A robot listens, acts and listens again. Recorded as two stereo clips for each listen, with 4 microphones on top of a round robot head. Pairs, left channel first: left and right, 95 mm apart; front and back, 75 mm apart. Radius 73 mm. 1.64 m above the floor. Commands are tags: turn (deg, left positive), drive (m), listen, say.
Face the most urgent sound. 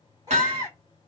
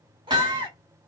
<turn deg="-155"/>
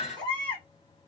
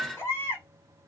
<turn deg="60"/>
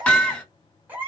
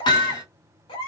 <turn deg="-15"/>
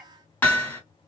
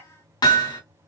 <listen/>
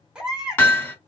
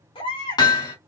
<say>Found it: a baby crying, straight ahead.</say>